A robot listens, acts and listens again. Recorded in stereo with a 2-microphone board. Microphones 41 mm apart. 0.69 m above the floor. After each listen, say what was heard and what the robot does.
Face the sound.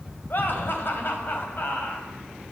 The laughter: about 60° left or 120° left. Turn 60° left.
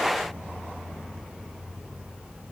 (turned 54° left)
Keep listening.
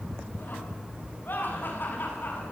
So it is at 60° left. Turn 60° left.
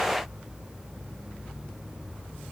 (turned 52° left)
Nothing new. It was at 10° left. Turn 10° left.
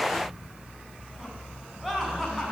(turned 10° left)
Found it: laughter, straight ahead.